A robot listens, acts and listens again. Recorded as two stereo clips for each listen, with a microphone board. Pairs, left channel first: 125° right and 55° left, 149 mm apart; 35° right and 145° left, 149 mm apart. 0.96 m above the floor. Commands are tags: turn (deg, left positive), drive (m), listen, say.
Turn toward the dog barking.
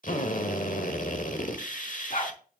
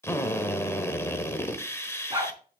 <turn deg="-155"/>
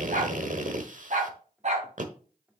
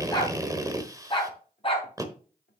<turn deg="15"/>
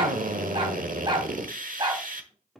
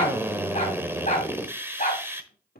<say>Found it: a dog barking, straight ahead.</say>